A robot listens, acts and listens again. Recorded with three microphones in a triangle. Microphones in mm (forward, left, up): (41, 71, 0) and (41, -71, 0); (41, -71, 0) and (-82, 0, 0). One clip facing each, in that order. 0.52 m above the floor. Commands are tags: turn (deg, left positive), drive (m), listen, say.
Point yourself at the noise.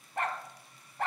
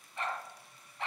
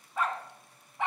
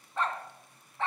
<turn deg="45"/>
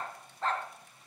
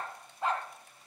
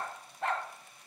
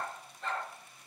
<turn deg="-15"/>
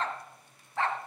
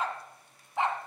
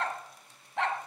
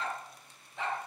<turn deg="-20"/>
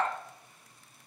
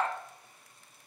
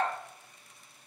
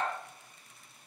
<turn deg="-10"/>
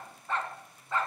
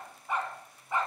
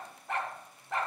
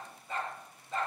<turn deg="-15"/>
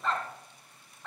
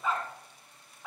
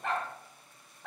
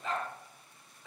<turn deg="-10"/>
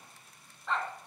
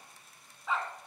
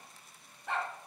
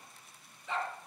<say>Found it: a dog barking, straight ahead.</say>